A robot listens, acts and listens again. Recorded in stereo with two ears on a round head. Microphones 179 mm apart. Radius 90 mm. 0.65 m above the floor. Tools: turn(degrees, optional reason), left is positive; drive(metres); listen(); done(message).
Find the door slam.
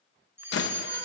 turn(degrees=65, reason="The door slam: about 65° left or 115° left.")
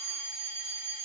listen()
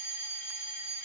done("I heard a door slam, but can't make it out now. It was about straight ahead or 50° left.")